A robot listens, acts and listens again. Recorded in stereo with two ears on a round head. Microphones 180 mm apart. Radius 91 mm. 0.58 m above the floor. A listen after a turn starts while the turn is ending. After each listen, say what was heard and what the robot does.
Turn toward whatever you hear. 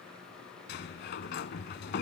The sliding door: about 55° left or 125° left. Turn 55° left.
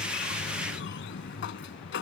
So it is at 65° left. Turn 65° left.
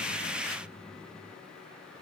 Facing the sliding door.